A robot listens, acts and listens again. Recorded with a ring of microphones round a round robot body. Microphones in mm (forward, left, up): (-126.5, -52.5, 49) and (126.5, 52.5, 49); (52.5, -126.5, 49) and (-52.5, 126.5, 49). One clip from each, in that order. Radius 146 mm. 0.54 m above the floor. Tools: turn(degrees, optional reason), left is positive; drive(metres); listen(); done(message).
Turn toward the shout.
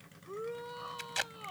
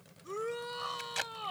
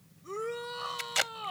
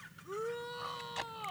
done("Found it: a shout, straight ahead.")